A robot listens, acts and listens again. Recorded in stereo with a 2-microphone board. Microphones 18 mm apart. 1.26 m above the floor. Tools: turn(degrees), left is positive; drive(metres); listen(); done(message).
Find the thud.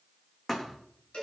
turn(degrees=25)
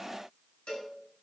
listen()
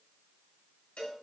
done("I heard a thud, but can't make it out now. It was about straight ahead or 130° left.")